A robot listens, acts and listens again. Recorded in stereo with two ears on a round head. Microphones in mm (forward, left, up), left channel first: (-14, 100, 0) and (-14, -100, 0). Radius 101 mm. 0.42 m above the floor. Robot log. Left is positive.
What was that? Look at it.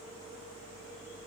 cmd idle
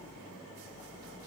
cmd idle
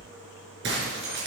note: The breaking glass: about 55° right or 125° right.
cmd yaw -55
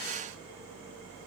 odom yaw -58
cmd idle
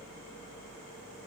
end: I heard breaking glass, but can't make it out now. It was about 5° left or 70° right.